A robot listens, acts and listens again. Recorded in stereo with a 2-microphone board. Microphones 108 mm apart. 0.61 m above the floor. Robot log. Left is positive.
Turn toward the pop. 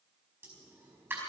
note: The pop: about 20° right or 160° right.
cmd yaw -20
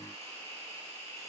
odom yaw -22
cmd idle
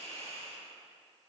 end: I heard a pop, but can't make it out now. It was about straight ahead or 140° right.